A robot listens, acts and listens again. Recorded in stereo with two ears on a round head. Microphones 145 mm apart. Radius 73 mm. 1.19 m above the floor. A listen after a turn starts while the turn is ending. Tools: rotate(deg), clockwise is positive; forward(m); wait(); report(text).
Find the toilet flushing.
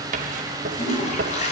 rotate(-45)
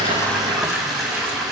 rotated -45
report("Facing the toilet flushing, over 4 m away.")